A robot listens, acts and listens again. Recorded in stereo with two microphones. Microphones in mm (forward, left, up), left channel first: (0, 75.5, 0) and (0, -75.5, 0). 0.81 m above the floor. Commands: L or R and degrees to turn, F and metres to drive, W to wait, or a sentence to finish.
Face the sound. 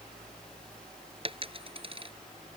R35
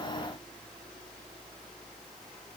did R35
W
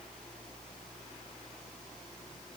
I heard a dropped coin, but can't make it out now. It was about straight ahead or 110° right.